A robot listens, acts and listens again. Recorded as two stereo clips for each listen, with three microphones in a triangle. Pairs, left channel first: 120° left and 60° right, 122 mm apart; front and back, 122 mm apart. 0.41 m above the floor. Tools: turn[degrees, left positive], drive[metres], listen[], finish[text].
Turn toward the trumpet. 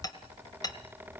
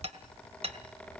Action: listen[]
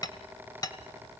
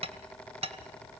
Action: listen[]
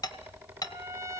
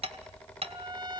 Thought: The trumpet: 125° right.
Action: turn[-125]
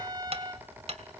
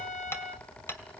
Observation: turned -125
Action: finish[Facing the trumpet.]